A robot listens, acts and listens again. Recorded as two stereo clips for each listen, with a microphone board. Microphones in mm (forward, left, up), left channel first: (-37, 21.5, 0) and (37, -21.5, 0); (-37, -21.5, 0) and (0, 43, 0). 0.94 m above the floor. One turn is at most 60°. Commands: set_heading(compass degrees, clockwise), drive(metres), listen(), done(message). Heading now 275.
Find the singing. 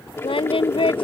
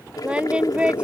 set_heading(215)
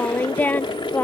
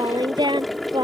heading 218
set_heading(158)
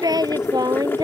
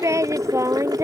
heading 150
set_heading(140)
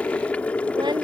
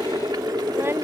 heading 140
listen()
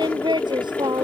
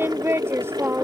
done("Found it: singing, straight ahead.")